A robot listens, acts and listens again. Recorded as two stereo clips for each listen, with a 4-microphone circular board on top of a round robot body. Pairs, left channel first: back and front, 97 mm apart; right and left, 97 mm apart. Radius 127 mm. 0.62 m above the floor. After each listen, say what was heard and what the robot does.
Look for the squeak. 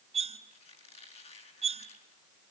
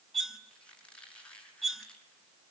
The squeak: 170° right. Turn 170° right.
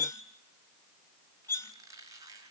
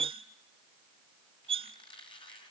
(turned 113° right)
The squeak is now 55° right. Turn 55° right.
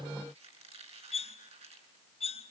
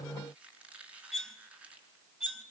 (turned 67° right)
The squeak is now 10° left. Turn 10° left.
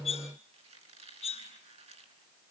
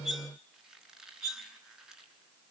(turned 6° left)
Found it: a squeak, straight ahead.